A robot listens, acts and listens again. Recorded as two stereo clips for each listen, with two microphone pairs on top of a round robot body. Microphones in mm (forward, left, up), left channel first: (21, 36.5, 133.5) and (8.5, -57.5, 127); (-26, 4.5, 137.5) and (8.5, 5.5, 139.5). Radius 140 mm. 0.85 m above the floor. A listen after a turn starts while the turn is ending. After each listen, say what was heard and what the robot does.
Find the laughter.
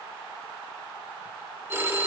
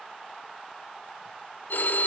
Keep listening.
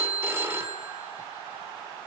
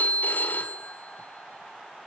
Keep listening.
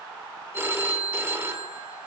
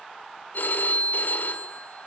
I can't make out laughter, only a phone ringing.